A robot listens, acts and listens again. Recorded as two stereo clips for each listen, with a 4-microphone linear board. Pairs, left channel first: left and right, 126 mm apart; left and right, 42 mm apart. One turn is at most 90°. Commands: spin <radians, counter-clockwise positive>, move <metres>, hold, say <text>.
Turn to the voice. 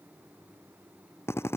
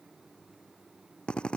hold
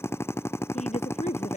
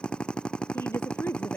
spin 1.57
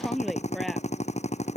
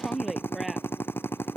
say Facing the woman speaking.